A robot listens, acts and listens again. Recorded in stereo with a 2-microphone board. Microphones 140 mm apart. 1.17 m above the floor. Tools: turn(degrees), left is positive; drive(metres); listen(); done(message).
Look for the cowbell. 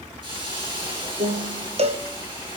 turn(degrees=-50)
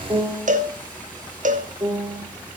turn(degrees=-75)
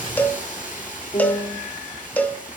turn(degrees=15)
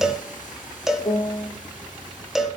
done("Facing the cowbell, under 1 m away.")